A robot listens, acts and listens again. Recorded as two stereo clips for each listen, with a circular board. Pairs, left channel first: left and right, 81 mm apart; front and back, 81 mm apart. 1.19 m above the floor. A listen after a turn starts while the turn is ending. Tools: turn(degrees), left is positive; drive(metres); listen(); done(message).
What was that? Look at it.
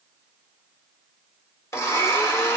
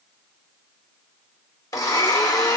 turn(degrees=35)
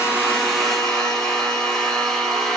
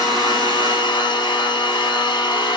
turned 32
done("Facing the blender, 1 to 2 m away.")